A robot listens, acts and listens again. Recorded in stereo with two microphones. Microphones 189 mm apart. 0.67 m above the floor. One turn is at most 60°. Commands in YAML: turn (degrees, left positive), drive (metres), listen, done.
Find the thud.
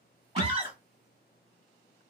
turn: 60
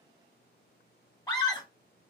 listen: true
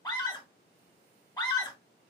done: "I heard a thud, but can't make it out now. It was about 10° left or 50° left."